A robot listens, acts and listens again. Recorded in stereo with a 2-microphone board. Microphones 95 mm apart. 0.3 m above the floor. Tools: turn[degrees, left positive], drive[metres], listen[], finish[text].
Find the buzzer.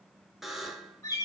Action: turn[-30]
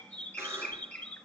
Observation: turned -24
Action: listen[]
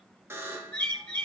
Thought: So it is at 155° right.
Action: turn[-155]
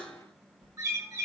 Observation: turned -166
Thought: The buzzer is now 10° left.
Action: turn[10]
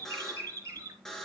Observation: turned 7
Action: finish[Found it: a buzzer, straight ahead.]